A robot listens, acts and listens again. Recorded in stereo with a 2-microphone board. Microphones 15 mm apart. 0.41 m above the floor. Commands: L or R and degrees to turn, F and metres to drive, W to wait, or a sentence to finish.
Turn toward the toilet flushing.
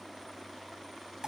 W
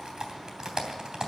W
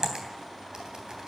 I can't make out a toilet flushing, only typing on a keyboard.